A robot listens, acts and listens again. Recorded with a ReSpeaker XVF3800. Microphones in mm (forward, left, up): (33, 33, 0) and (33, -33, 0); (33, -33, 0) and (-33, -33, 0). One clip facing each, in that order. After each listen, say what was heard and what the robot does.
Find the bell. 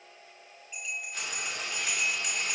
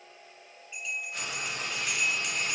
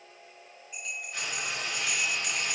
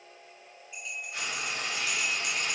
The bell: 15° left. Turn 15° left.
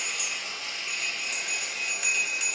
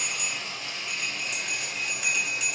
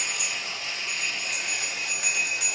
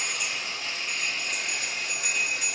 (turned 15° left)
Facing the bell.